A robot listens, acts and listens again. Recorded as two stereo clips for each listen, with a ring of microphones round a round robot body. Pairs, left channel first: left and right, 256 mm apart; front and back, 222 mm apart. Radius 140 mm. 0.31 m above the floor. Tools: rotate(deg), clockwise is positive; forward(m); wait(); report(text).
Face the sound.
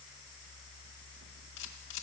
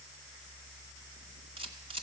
rotate(-115)
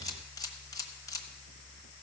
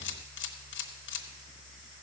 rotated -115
rotate(-15)
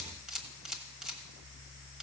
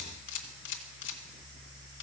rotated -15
report("Facing the camera shutter, 1 to 2 m away.")